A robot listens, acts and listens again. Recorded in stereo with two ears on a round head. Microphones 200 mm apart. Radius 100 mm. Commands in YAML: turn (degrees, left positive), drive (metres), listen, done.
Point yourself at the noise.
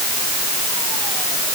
listen: true
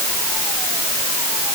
listen: true
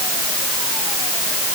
done: "I can't make out anything."